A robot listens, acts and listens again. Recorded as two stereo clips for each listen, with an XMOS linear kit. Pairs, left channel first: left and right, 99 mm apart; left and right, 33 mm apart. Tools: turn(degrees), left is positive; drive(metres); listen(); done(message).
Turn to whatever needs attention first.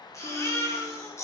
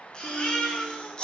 turn(degrees=30)
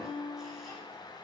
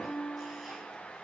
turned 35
listen()
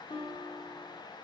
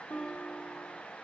listen()
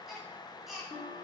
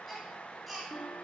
done("Found it: a baby crying, straight ahead, 1 to 2 m away.")